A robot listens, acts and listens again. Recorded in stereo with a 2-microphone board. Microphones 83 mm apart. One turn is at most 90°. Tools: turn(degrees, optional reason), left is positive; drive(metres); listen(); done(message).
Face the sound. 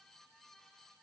listen()
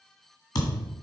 turn(degrees=50, reason="The thud: about 50° left or 130° left.")
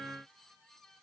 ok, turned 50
listen()
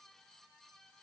done("I heard a thud, but can't make it out now. It was about straight ahead or 80° left.")